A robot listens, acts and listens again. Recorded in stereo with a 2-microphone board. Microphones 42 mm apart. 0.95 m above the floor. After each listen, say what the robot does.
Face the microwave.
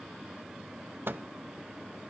Turn 60° right.
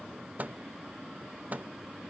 Turn 45° right.
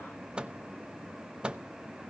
Turn 25° right.
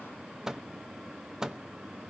Turn 15° right.
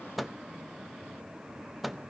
Found it: a microwave, straight ahead, under 1 m away.